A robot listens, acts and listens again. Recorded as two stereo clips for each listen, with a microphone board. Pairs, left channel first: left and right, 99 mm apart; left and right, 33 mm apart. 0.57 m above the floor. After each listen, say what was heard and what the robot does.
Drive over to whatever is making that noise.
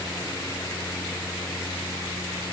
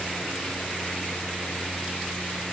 Keep listening.
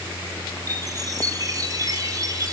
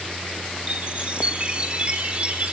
The chime: about 35° right or 145° right. Turn 35° right.
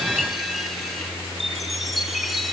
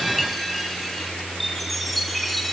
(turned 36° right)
Drive 1.0 m forward.
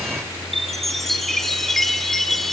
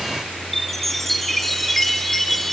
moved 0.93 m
Drive 1.0 m forward.
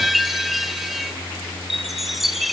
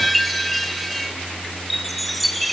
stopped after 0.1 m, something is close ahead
I am next to the chime.